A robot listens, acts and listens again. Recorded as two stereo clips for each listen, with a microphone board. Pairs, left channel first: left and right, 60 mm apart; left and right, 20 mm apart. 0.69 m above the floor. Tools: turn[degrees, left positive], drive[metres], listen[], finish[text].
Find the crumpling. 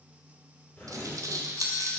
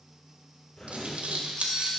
Action: turn[-90]
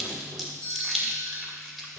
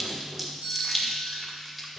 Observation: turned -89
Action: finish[Facing the crumpling.]